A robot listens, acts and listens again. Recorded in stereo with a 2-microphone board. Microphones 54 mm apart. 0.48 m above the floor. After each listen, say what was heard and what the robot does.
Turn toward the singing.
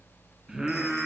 Turn 30° right.
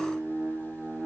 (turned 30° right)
So it is at 140° right. Turn 140° right.
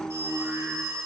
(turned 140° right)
Facing the singing, over 4 m away.